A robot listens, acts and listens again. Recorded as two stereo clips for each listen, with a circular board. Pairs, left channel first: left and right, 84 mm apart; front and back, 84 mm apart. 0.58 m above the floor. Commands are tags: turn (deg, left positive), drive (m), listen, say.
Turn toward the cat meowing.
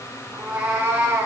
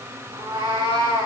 <turn deg="-150"/>
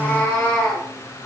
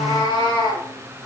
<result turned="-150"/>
<turn deg="30"/>
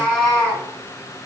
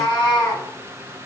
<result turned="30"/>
<turn deg="15"/>
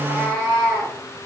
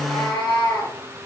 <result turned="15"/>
<turn deg="10"/>
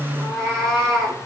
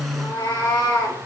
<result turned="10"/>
<say>Facing the cat meowing, 2 to 4 m away.</say>